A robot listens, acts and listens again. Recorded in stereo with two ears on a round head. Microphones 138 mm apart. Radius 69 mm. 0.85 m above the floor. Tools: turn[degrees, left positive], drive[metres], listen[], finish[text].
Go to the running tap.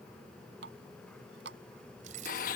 Action: turn[-90]
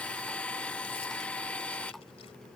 Action: listen[]
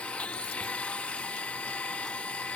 Action: listen[]
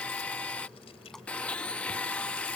Action: finish[I heard a running tap from this way, but can't make it out now. I did not reach it.]